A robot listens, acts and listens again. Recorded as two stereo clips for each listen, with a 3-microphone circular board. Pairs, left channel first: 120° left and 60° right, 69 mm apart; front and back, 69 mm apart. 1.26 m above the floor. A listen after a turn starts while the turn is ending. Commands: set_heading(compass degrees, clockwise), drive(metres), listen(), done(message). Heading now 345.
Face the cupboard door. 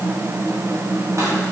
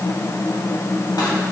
listen()
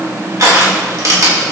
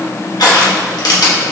listen()
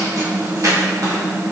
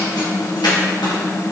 done("I can't make out a cupboard door to turn to.")